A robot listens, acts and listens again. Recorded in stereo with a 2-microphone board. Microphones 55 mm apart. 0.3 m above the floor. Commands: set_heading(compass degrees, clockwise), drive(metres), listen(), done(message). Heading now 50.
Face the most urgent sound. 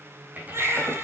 set_heading(100)
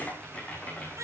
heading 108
set_heading(178)
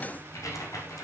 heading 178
listen()
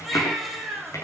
done("Facing the baby crying, over 4 m away.")